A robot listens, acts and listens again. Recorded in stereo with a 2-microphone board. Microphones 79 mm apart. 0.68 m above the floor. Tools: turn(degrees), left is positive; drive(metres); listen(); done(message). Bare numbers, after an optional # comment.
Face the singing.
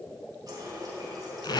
listen()
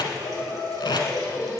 # The singing: about 40° left or 140° left.
turn(40)
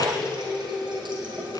# So it is at 10° right.
turn(-10)
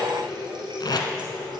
listen()
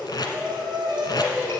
# The singing is now 25° right.
turn(-25)
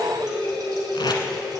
done("Found it: singing, straight ahead.")